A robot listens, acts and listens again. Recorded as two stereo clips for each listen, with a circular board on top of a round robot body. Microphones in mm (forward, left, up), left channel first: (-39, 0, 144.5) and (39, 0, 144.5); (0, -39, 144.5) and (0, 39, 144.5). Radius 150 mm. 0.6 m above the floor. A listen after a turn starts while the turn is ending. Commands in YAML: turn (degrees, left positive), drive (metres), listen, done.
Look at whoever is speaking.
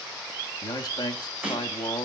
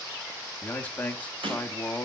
turn: -160
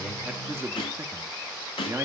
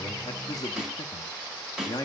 turn: -60
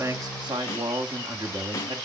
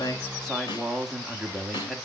done: "Facing the man speaking, 1 to 2 m away."